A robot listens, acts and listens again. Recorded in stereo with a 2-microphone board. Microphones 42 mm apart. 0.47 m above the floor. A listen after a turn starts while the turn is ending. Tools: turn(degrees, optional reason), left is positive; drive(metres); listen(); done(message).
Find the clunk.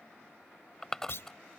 turn(degrees=65, reason="The clunk: about 65° left or 115° left.")
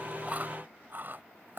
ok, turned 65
listen()
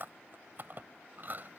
done("I heard a clunk, but can't make it out now. It was about straight ahead or 50° left.")